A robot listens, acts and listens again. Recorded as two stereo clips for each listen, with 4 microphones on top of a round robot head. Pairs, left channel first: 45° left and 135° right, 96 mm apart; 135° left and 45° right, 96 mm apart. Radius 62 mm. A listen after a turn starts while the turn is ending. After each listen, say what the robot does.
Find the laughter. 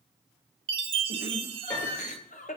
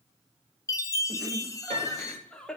Turn 55° left.
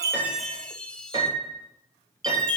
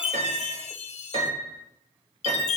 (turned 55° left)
Keep listening.
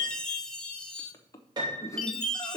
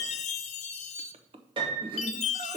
Turn 10° right.
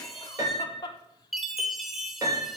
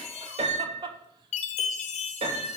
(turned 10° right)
Facing the laughter.